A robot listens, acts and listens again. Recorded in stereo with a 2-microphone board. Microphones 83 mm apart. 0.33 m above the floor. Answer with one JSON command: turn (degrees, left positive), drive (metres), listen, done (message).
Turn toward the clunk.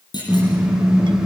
{"turn": 60}
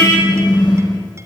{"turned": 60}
{"listen": true}
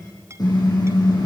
{"done": "I heard a clunk, but can't make it out now. It was about straight ahead or 60° left."}